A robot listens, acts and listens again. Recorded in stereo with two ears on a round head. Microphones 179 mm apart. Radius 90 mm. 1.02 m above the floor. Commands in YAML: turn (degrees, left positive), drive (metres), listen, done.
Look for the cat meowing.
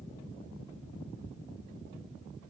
listen: true
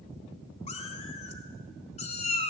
turn: 35
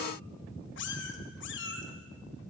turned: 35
turn: 110
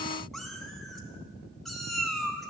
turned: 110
done: "Facing the cat meowing."